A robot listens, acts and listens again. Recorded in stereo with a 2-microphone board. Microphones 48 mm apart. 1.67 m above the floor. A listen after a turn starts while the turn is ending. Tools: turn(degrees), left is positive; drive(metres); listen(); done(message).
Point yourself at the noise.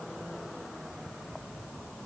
listen()
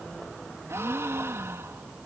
turn(degrees=-70)
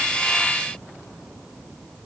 listen()
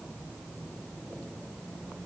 done("I heard a gasp, but can't make it out now. It was about straight ahead or 40° right.")